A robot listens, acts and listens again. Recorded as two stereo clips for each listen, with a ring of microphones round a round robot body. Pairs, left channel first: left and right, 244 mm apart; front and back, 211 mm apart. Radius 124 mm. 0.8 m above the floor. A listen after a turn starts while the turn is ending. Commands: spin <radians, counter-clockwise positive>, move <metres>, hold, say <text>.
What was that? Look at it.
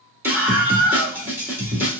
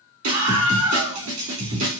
spin -2.97
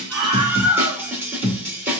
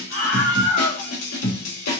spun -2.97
spin -0.17
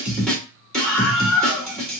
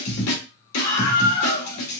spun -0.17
say Found it: a scream, straight ahead.